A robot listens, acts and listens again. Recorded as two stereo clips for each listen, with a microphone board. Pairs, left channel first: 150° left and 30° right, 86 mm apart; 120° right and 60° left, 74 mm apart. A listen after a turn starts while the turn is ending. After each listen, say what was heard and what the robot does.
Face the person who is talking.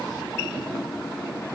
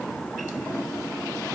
Keep listening.
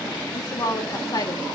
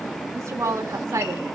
The woman speaking: 110° left. Turn 110° left.
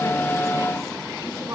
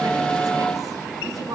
The woman speaking is now 25° left. Turn 25° left.
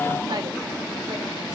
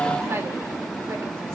Keep listening.
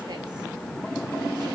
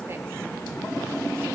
Keep listening.
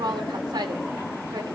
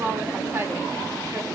Facing the woman speaking.